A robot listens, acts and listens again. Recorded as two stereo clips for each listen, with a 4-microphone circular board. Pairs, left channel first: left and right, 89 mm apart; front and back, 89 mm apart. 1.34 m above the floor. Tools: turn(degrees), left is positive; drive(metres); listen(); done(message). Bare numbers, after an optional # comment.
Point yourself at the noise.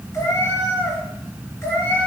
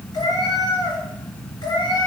# The cat meowing: 30° left.
turn(30)
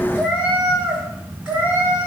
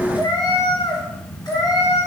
# The cat meowing is now 20° right.
turn(-20)
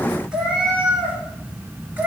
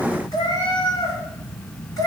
# The cat meowing is now 30° right.
turn(-30)
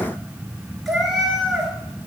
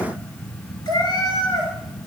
done("Found it: a cat meowing, straight ahead.")